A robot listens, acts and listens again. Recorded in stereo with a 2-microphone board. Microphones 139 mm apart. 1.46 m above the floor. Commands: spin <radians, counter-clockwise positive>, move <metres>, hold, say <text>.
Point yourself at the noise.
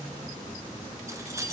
spin -0.35
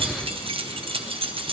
spin -2.44
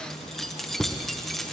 say Found it: keys jangling, straight ahead, under 1 m away.